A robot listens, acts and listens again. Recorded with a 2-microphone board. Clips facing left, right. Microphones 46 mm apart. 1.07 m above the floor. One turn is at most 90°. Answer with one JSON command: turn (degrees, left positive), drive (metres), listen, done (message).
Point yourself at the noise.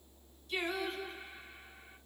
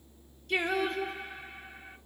{"turn": -60}
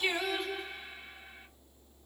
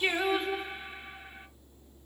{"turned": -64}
{"turn": -30}
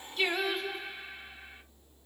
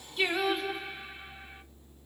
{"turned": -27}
{"done": "Found it: singing, straight ahead."}